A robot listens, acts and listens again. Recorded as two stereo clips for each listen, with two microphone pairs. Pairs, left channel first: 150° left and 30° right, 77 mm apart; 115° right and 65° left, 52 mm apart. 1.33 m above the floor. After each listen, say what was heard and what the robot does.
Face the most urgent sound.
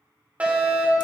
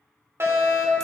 The fire alarm: 40° left. Turn 40° left.
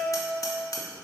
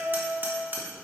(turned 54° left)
Nothing new. It was at 15° right. Turn 15° right.
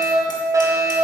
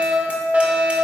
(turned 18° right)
Facing the fire alarm.